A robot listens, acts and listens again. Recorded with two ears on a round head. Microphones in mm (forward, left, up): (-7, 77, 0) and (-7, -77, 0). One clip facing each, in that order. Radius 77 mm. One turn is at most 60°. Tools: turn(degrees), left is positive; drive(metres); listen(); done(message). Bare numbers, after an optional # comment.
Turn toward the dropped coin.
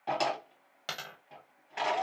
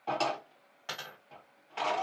# The dropped coin: about 45° left or 135° left.
turn(45)
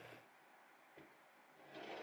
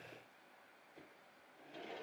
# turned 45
listen()
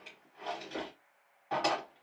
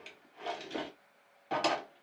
done("I heard a dropped coin, but can't make it out now. It was about straight ahead or 90° left.")